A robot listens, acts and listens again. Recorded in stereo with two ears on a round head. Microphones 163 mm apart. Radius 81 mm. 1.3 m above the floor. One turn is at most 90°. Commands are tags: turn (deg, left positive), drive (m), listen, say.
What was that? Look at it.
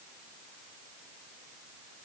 <listen/>
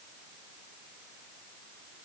<listen/>
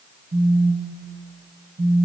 <turn deg="-65"/>
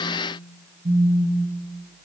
<turn deg="-45"/>
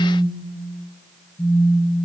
<turn deg="15"/>
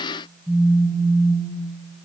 <say>Facing the phone buzzing, over 4 m away.</say>